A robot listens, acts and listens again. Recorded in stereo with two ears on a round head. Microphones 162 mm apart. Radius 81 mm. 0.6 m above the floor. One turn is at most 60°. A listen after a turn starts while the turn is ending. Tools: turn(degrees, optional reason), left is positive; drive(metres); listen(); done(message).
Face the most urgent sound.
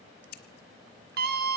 turn(degrees=-55, reason="The scream: about 55° right or 125° right.")
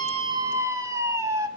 turn(degrees=-20, reason="So it is at 20° right.")
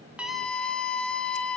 done("Facing the scream.")